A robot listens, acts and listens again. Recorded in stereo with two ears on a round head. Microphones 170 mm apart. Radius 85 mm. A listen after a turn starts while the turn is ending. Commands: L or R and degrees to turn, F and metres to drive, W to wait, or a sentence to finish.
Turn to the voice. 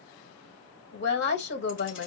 L65
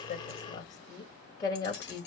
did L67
L25
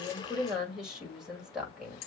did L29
Found it: a woman speaking, straight ahead.